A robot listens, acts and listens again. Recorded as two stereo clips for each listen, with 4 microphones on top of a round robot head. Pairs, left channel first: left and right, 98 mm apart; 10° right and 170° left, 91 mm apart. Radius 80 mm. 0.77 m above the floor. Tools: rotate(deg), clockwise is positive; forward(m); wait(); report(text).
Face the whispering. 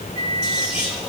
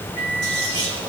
rotate(170)
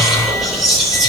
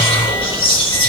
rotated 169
report("Facing the whispering.")